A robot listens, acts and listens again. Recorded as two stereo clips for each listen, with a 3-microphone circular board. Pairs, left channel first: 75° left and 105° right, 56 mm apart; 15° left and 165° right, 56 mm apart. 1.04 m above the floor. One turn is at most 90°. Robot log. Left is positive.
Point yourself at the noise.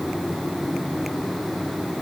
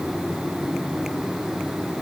cmd idle
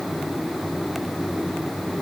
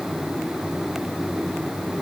cmd idle
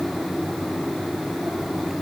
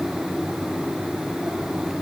end: I can't make out anything to turn to.